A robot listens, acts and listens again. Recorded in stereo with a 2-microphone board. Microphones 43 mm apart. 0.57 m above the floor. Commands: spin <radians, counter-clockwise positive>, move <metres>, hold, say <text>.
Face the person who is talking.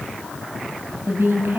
spin -1.57
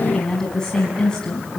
spin 0.26
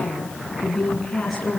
say Found it: a woman speaking, straight ahead, over 4 m away.